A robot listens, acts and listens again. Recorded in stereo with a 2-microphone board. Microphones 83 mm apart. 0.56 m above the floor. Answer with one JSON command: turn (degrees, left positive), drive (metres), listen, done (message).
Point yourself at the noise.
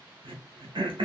{"turn": -90}
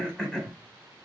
{"done": "Facing the throat clearing, under 1 m away."}